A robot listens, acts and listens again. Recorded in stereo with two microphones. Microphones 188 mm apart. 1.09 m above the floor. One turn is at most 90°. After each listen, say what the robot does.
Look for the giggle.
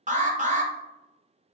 Keep listening.
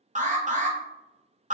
Keep listening.
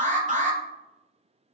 I can't make out a giggle to turn to.